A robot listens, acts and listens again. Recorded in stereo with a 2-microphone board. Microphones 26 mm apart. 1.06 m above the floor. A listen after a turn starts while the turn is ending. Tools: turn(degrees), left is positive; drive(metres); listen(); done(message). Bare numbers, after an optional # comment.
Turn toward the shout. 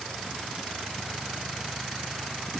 listen()
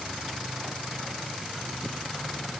listen()
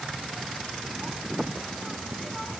done("I can't make out a shout to turn to.")